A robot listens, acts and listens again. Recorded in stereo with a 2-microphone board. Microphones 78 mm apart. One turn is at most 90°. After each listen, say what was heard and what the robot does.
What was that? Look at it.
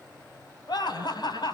The laughter: about 65° left or 115° left. Turn 65° left.
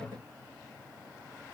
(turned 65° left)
Keep listening.
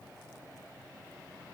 Keep listening.
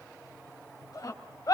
So it is at 55° left. Turn 55° left.
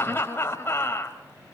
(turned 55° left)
The laughter is now 30° left. Turn 30° left.
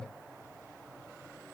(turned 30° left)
Keep listening.
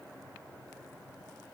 Keep listening.
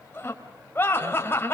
The laughter is now 30° left. Turn 30° left.
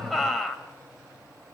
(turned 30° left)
Facing the laughter.